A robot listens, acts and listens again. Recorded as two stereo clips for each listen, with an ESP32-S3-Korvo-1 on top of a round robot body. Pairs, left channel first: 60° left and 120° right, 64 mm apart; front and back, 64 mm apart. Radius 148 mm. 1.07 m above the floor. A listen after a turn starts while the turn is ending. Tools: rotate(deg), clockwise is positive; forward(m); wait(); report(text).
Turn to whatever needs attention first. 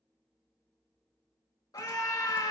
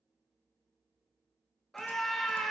rotate(-85)
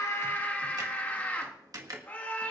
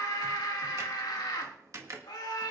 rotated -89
report("Found it: a scream, straight ahead.")